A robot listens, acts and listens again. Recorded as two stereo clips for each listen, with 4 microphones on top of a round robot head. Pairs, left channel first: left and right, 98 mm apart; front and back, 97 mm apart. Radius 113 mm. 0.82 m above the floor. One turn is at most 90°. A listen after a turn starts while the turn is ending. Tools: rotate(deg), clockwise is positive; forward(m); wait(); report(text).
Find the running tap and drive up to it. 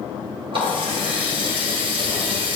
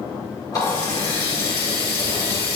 rotate(55)
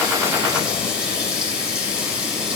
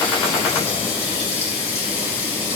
rotate(10)
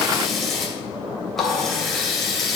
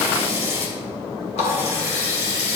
forward(1.0)
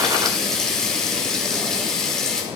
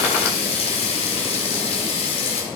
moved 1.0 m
forward(1.0)
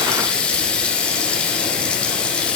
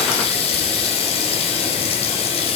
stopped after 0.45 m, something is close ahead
rotate(-10)
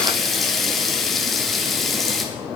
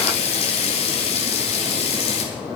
report("I am next to the running tap.")